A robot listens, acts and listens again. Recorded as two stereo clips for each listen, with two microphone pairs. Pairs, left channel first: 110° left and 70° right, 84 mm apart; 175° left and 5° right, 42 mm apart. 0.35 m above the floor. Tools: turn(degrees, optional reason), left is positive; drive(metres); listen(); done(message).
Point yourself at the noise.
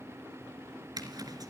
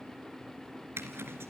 turn(degrees=-30, reason="The zipper: 30° right.")
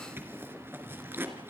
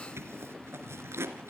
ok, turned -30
done("Facing the zipper.")